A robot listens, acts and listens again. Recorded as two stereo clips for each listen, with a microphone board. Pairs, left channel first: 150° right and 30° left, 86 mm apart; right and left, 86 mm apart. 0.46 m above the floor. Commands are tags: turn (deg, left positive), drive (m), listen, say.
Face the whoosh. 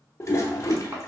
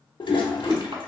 <turn deg="165"/>
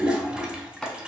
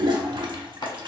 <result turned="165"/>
<listen/>
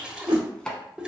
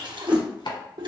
<turn deg="15"/>
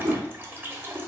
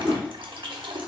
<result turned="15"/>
<say>Facing the whoosh, 1 to 2 m away.</say>